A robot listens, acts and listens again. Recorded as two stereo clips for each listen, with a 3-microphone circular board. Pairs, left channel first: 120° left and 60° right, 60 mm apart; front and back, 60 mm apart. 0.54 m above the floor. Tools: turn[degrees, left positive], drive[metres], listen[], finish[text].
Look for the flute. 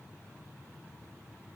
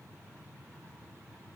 Action: listen[]
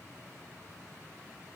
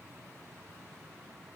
Action: listen[]
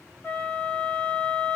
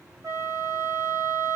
Thought: The flute: straight behind.
Action: turn[180]
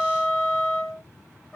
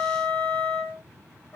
Thought: The flute is now 50° left.
Action: turn[50]
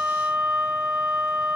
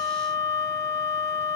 Thought: The flute is now 15° left.
Action: turn[15]
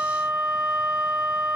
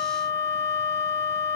Action: finish[Facing the flute, 2 to 4 m away.]